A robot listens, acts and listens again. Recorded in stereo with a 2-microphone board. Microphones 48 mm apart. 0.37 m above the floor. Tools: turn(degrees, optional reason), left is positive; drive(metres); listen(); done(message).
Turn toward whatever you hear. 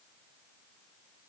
listen()
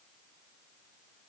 listen()
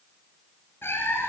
turn(degrees=55, reason="The cat meowing: about 55° left or 125° left.")
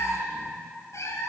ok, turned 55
turn(degrees=80, reason="So it is at 80° left.")
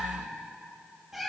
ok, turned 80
done("Facing the cat meowing.")